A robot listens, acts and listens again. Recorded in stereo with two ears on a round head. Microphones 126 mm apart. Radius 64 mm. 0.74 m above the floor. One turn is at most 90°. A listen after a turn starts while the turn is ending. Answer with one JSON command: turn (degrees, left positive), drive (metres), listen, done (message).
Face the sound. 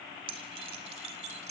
{"turn": -45}
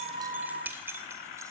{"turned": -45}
{"turn": -15}
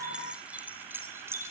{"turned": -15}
{"turn": -20}
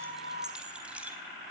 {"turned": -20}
{"turn": -10}
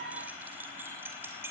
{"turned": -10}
{"turn": -15}
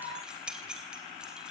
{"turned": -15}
{"done": "Facing the keys jangling."}